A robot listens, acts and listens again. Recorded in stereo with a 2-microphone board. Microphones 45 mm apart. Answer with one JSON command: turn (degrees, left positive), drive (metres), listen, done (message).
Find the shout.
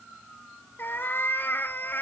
{"listen": true}
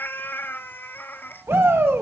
{"turn": -60}
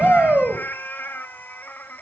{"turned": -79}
{"turn": -30}
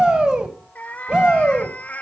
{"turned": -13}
{"turn": -20}
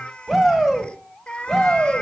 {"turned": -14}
{"done": "Facing the shout, 2 to 4 m away."}